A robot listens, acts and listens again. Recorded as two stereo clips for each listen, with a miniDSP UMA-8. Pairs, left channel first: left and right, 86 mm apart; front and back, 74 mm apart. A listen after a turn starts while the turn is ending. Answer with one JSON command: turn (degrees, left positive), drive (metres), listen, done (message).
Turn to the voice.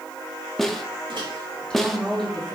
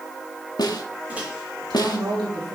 {"turn": 175}
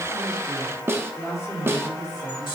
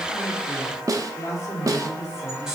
{"turn": 40}
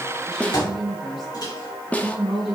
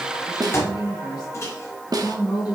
{"done": "Facing the woman speaking, over 4 m away."}